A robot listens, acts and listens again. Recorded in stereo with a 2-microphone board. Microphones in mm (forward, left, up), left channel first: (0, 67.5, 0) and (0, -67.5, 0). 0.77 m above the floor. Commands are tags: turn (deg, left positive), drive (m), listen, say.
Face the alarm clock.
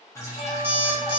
<turn deg="-30"/>
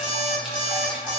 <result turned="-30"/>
<turn deg="-140"/>
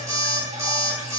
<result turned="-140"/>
<turn deg="-25"/>
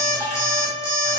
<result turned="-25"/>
<turn deg="20"/>
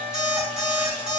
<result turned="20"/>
<say>Found it: an alarm clock, straight ahead.</say>